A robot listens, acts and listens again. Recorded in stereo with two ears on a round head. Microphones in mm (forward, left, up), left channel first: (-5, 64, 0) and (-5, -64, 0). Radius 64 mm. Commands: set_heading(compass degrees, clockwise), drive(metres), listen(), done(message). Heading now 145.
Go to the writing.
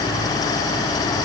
listen()
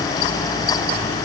listen()
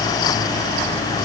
done("I can't make out writing.")